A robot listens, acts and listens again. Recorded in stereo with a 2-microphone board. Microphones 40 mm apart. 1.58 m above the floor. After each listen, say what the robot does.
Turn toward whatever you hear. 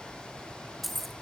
Turn 30° left.
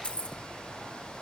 Turn 150° left.
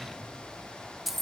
Facing the keys jangling.